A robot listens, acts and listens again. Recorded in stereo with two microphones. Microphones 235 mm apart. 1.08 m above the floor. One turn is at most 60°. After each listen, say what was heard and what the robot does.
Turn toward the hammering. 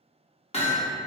The hammering: about 25° left or 155° left. Turn 25° left.
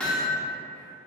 Facing the hammering, under 1 m away.